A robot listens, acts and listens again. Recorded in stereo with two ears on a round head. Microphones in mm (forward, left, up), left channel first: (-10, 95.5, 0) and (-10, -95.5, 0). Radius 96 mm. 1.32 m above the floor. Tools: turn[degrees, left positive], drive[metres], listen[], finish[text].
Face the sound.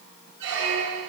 Thought: The squeak: about 55° right or 125° right.
Action: turn[-55]
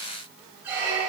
Thought: So it is at 10° right.
Action: turn[-10]
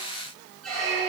Action: finish[Found it: a squeak, straight ahead, 1 to 2 m away.]